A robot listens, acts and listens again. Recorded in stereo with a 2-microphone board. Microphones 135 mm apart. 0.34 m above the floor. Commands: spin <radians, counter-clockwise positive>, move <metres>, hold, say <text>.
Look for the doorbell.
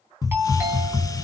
spin -0.26
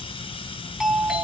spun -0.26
say Facing the doorbell.